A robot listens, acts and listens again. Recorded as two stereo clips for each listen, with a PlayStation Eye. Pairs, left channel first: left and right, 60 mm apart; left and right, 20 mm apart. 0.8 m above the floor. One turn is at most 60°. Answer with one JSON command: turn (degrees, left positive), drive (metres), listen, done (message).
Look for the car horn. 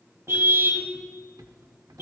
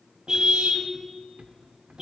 {"turn": -45}
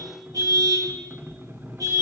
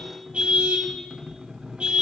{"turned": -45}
{"turn": -60}
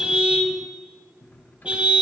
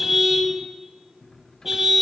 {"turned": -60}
{"turn": -20}
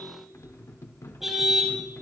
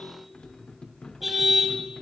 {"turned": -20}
{"done": "Facing the car horn, 2 to 4 m away."}